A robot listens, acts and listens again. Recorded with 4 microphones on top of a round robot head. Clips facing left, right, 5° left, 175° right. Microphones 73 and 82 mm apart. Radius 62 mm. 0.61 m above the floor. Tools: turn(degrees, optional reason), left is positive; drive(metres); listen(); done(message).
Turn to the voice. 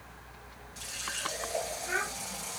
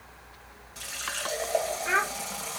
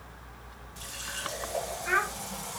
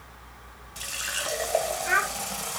turn(degrees=-95, reason="The child speaking: 95° right.")
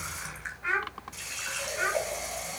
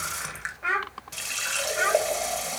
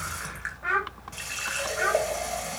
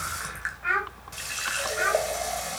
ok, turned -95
turn(degrees=-70, reason="The child speaking is now 70° right.")
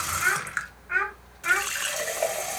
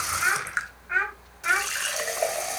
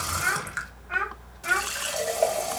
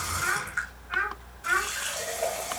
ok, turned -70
done("Facing the child speaking.")